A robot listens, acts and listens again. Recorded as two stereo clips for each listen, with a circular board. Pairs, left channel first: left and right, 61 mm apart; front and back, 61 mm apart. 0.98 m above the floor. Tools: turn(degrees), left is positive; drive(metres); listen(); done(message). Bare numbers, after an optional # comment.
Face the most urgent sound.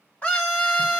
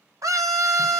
# The scream: 155° left.
turn(155)
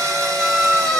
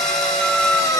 done("Found it: a scream, straight ahead, under 1 m away.")